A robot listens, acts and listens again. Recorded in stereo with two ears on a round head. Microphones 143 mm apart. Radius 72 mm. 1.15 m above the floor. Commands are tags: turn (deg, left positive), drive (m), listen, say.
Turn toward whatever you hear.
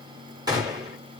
<turn deg="-25"/>
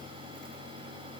<listen/>
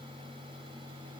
<say>I heard a gunshot, but can't make it out now. It was about straight ahead or 130° right.</say>